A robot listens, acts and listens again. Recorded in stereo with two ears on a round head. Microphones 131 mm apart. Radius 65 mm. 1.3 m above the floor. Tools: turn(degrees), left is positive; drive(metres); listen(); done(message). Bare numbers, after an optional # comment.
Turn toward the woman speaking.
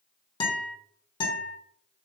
listen()
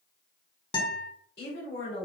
# The woman speaking: about 70° left or 110° left.
turn(70)
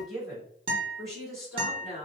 done("Facing the woman speaking, 2 to 4 m away.")